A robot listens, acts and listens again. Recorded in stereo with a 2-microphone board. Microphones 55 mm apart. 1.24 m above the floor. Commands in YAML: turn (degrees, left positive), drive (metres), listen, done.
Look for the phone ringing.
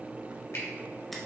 listen: true
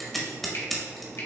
listen: true
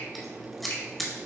done: "I can't make out a phone ringing to turn to."